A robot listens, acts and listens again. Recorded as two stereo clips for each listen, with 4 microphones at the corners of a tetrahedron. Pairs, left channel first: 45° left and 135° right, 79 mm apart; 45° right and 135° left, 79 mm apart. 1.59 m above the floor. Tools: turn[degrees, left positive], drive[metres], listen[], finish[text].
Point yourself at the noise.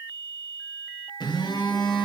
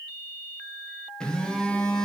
Thought: The phone buzzing: 35° left.
Action: turn[35]
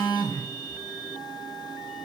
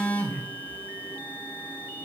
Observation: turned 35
Thought: The phone buzzing is now 20° left.
Action: turn[20]
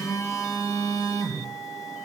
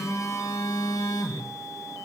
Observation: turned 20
Action: finish[Facing the phone buzzing, under 1 m away.]